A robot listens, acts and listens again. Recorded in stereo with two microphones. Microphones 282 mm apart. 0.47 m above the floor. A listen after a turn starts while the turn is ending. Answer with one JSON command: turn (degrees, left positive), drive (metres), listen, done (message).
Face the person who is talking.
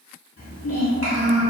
{"turn": 55}
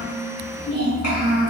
{"turn": 70}
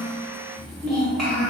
{"done": "Facing the child speaking."}